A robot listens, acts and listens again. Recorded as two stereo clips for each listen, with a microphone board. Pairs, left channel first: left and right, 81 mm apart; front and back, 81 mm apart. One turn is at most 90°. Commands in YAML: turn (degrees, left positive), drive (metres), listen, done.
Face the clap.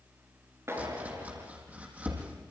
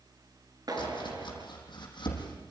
turn: -90
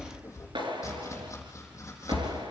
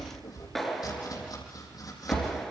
turn: -90
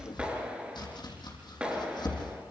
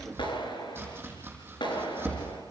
turn: -10
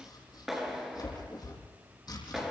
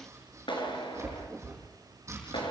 done: "Facing the clap, over 4 m away."